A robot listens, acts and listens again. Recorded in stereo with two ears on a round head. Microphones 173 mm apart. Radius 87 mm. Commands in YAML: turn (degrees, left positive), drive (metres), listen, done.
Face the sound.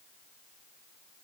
listen: true
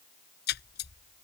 turn: 55
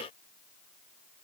listen: true
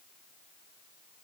done: "I heard a splash, but can't make it out now. It was about straight ahead or 70° left."